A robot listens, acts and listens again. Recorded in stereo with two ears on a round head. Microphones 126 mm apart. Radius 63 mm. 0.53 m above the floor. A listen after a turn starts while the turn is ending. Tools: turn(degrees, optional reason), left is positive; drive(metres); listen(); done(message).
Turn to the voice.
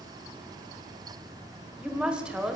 turn(degrees=-30)
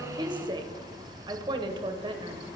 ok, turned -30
turn(degrees=-145, reason="So it is at 145° right.")
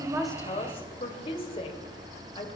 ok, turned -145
turn(degrees=45, reason="The woman speaking is now 45° left.")
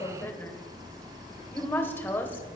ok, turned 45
turn(degrees=15, reason="The woman speaking is now 15° left.")
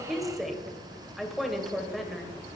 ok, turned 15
done("Found it: a woman speaking, straight ahead.")